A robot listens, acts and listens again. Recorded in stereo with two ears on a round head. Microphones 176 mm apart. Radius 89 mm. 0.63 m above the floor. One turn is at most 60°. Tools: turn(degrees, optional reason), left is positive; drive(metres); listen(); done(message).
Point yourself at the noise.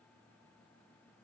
listen()
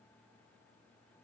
listen()
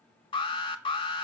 turn(degrees=25, reason="The alarm: about 25° left or 155° left.")
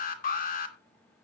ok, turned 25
turn(degrees=60, reason="So it is at 125° left.")
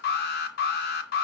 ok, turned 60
turn(degrees=60, reason="The alarm is now 65° left.")
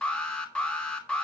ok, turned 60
done("Found it: an alarm, straight ahead.")